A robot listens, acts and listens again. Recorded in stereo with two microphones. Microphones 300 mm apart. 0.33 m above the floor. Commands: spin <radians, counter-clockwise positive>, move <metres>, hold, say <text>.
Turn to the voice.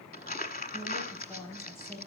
spin 0.52
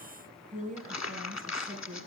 spin -0.52
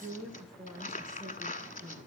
say Facing the woman speaking, 2 to 4 m away.